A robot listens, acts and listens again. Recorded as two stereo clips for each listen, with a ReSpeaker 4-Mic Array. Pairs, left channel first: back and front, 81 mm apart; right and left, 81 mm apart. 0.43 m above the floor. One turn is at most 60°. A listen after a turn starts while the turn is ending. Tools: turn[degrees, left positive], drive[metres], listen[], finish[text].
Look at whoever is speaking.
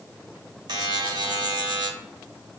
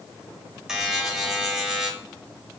Action: listen[]
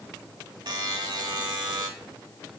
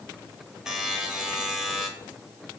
Action: listen[]
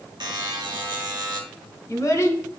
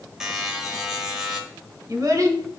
Thought: The child speaking: 130° left.
Action: turn[60]
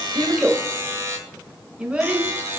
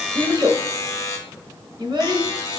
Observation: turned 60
Thought: The child speaking is now 75° left.
Action: turn[60]
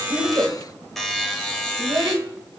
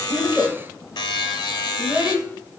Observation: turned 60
Thought: The child speaking is now 30° left.
Action: turn[30]
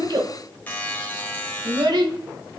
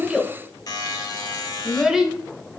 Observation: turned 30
Thought: The child speaking is now 10° left.
Action: turn[10]
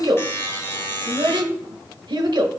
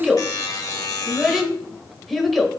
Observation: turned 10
Action: finish[Facing the child speaking, under 1 m away.]